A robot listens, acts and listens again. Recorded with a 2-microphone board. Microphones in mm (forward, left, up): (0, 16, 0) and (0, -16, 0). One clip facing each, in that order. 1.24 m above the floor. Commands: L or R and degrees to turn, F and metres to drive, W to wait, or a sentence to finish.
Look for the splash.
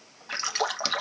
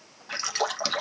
L30
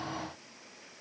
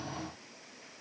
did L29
W
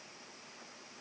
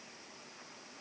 I heard a splash, but can't make it out now. It was about 25° right or 145° left.